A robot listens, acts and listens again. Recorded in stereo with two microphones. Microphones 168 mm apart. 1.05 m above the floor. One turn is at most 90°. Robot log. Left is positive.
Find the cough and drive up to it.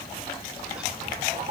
cmd idle
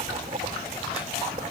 cmd idle
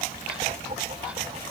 end: I can't make out a cough, only writing.